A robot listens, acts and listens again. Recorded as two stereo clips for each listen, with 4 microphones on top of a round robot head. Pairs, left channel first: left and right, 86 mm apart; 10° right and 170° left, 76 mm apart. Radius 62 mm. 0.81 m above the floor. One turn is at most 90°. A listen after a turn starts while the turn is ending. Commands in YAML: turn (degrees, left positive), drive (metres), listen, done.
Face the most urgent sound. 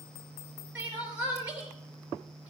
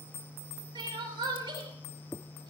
turn: -90
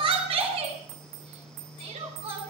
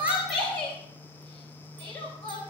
turn: -90
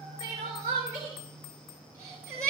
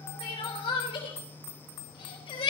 turn: -25
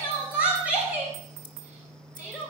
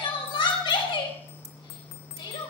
turn: -10
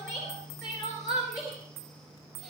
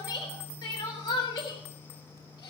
done: "Facing the crying."